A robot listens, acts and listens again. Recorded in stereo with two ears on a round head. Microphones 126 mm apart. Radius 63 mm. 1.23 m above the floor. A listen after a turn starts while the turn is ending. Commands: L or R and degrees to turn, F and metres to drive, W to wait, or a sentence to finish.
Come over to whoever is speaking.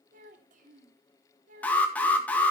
R60
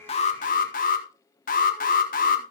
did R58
W
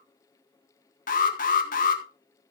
W
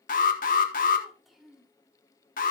F1.0
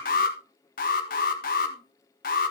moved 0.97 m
W
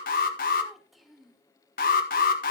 F1.0
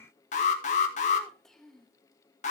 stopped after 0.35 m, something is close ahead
I am next to the child speaking.